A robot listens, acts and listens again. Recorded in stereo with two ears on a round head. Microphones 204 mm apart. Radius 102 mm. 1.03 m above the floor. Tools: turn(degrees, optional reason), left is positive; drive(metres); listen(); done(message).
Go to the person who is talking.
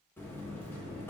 listen()
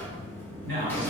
turn(degrees=-50, reason="The man speaking: about 50° right or 130° right.")
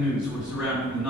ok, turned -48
drive(metres=1.0)
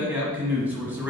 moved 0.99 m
turn(degrees=-10, reason="The man speaking is now 10° right.")
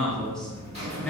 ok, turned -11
drive(metres=1.0)
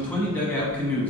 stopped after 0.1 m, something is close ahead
done("I am next to the man speaking.")